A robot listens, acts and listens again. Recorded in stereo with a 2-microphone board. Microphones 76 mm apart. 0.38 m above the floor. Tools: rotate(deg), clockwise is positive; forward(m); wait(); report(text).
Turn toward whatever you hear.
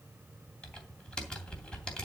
rotate(-30)
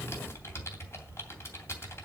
rotate(-140)
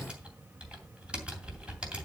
rotate(15)
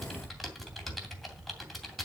report("Facing the typing on a keyboard, 2 to 4 m away.")